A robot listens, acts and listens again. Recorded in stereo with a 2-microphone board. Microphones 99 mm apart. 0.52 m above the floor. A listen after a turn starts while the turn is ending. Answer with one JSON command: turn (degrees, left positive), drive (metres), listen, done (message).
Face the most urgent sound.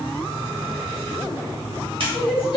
{"turn": 60}
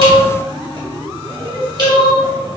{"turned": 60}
{"turn": 50}
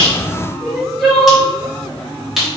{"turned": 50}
{"done": "Facing the crying, 1 to 2 m away."}